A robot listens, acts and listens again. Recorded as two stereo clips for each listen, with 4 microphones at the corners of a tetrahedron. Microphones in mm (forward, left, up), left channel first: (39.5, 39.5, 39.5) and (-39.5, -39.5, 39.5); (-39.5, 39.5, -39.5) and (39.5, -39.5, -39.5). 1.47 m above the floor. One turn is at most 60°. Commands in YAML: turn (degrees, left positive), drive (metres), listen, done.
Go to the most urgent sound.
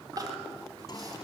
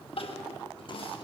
turn: 60
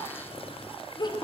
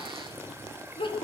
turn: 60
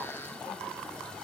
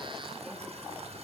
turn: 35
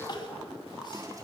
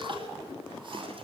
drive: 1.0
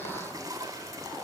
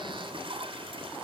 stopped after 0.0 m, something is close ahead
listen: true
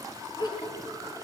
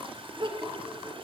done: "Something is in my way. I am facing the crying but have not reached it."